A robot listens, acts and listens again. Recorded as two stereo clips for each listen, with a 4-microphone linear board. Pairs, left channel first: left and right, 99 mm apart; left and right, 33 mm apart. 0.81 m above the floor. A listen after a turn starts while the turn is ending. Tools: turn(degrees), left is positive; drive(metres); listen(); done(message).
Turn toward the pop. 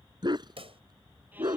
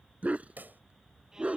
turn(degrees=-70)
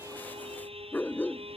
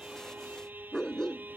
listen()
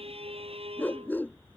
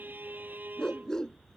done("I heard a pop, but can't make it out now. It was about straight ahead or 40° right.")